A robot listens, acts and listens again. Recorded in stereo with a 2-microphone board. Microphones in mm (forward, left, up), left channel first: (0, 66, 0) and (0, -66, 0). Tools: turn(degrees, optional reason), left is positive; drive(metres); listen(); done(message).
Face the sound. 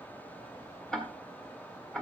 turn(degrees=30)
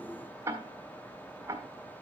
turn(degrees=-20, reason="So it is at 20° right.")
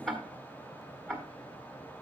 done("Found it: ticking, straight ahead, 1 to 2 m away.")